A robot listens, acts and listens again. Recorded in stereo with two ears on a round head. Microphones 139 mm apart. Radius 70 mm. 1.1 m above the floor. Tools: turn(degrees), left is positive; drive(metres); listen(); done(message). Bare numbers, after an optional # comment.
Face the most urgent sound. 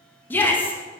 turn(30)
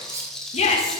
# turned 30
# So it is at 135° left.
turn(135)
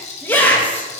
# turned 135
# The shout is now 10° left.
turn(10)
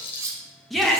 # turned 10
done("Found it: a shout, straight ahead, 1 to 2 m away.")